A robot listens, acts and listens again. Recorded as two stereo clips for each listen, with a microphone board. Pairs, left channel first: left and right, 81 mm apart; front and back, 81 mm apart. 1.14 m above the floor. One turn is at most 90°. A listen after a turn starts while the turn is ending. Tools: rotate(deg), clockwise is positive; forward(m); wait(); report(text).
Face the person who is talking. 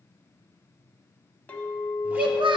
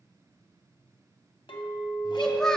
rotate(85)
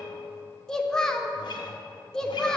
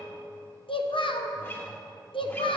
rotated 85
report("Facing the child speaking.")